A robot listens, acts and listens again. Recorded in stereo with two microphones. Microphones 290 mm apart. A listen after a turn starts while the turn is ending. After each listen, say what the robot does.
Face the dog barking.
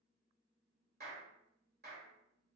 Keep listening.
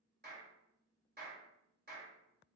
Keep listening.
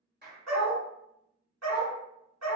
Turn 65° right.
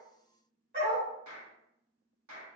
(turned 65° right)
Turn 35° right.
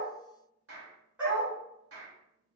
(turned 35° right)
Found it: a dog barking, straight ahead, 1 to 2 m away.